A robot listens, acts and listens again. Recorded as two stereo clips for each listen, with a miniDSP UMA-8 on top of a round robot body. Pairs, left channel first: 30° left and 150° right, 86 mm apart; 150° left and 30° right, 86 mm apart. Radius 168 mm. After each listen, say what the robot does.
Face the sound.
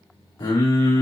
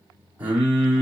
Turn 45° left.
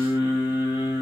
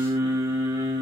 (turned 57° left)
Turn 10° right.
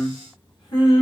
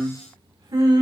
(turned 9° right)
Facing the singing.